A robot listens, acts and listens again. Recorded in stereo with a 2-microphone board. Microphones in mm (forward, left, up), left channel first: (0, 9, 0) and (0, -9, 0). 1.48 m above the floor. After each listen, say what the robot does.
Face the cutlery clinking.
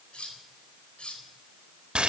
Turn 90° left.
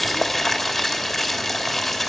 Keep listening.
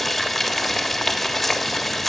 Keep listening.
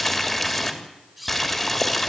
Facing the cutlery clinking, over 4 m away.